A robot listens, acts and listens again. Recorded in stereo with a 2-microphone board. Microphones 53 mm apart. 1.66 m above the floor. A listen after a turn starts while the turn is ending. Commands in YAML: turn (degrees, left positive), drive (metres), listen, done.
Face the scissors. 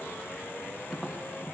listen: true
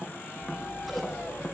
turn: 30
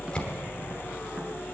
turn: 150
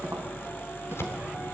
turn: 60
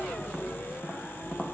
done: "Facing the scissors, 2 to 4 m away."